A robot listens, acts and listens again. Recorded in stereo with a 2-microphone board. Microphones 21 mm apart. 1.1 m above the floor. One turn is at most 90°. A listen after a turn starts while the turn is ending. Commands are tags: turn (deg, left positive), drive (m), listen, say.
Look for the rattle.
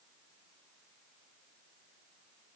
<listen/>
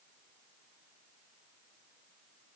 <listen/>
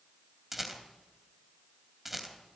<turn deg="-30"/>
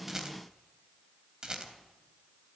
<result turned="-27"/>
<turn deg="-90"/>
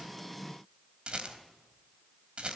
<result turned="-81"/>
<turn deg="-60"/>
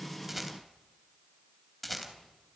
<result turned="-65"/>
<say>Facing the rattle.</say>